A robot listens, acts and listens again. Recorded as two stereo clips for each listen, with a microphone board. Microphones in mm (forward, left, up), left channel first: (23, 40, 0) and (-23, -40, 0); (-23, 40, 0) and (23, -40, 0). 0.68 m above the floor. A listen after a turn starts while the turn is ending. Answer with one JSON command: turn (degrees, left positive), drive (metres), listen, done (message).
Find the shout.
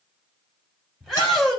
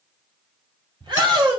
{"turn": -25}
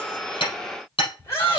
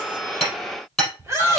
{"done": "Found it: a shout, straight ahead, over 4 m away."}